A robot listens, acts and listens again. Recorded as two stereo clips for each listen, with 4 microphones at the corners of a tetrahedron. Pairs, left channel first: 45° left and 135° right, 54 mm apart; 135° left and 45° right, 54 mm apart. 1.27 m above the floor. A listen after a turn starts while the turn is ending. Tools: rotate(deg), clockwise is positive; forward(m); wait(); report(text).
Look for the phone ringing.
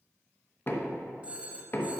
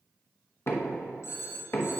rotate(-160)
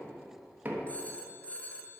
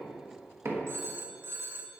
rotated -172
rotate(15)
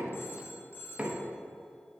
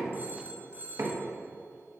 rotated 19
report("Facing the phone ringing.")